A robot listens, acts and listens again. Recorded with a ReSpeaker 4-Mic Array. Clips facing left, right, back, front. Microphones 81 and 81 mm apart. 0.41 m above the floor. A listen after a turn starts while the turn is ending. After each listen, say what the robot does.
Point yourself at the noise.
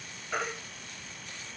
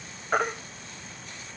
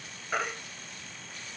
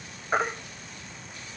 Turn 55° right.
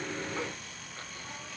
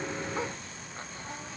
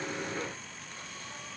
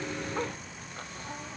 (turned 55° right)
Keep listening.
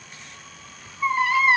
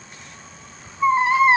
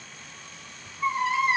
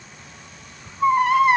Turn 25° right.
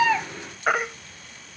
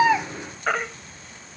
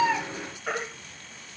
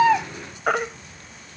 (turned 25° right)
Turn 15° left.
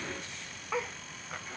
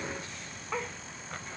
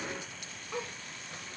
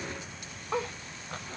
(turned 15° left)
Keep listening.
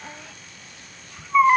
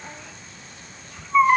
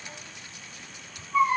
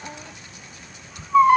Found it: a baby crying, straight ahead.